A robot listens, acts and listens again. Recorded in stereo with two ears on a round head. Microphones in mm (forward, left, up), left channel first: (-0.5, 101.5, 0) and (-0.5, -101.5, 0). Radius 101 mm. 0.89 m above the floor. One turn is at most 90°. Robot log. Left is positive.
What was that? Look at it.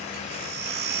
note: The baby crying: about 50° right or 130° right.
cmd yaw -50
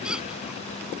cmd idle
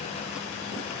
cmd idle
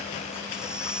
end: Facing the baby crying.